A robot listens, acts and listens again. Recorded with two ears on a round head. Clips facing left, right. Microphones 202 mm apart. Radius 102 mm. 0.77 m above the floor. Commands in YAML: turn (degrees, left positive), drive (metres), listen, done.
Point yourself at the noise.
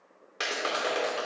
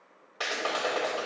turn: 30
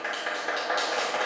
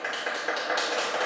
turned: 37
done: "Facing the clap, 2 to 4 m away."